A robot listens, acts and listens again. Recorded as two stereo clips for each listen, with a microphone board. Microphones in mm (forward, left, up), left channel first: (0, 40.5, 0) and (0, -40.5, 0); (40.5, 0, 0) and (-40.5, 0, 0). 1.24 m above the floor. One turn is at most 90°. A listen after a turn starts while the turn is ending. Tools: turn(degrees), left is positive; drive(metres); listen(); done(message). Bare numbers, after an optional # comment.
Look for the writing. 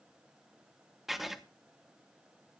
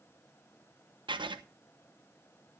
# The writing: straight behind.
turn(90)
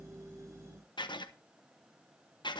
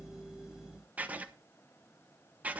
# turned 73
# The writing is now 110° left.
turn(90)
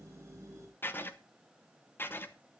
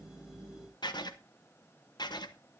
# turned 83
# The writing is now 25° left.
turn(25)
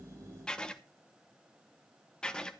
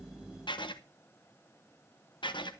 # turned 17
# The writing is now 10° left.
turn(10)
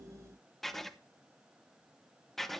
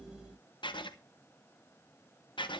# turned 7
done("Found it: writing, straight ahead.")